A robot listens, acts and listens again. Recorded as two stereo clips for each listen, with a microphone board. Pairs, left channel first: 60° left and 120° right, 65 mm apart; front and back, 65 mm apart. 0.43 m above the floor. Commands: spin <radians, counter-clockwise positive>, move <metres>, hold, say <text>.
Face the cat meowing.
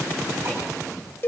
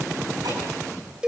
hold
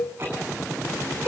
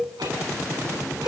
hold
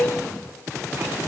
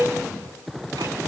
say I can't make out a cat meowing to turn to.